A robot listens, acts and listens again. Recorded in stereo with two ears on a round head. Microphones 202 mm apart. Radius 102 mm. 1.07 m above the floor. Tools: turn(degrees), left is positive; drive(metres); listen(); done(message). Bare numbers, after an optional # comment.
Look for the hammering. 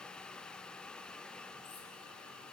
listen()
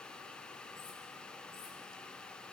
listen()
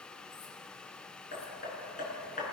# The hammering: about 35° left or 145° left.
turn(35)
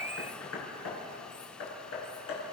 # So it is at 105° left.
turn(105)
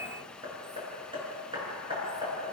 # The hammering is now 20° right.
turn(-20)
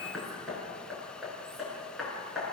done("Found it: hammering, straight ahead, over 4 m away.")